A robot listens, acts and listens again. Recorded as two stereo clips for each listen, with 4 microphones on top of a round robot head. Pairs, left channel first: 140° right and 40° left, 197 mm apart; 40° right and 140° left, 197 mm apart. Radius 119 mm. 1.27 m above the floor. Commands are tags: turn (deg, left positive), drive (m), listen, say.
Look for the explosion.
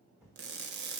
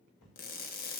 <turn deg="-45"/>
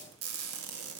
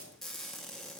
<say>I heard an explosion from this way, but can't make it out now.</say>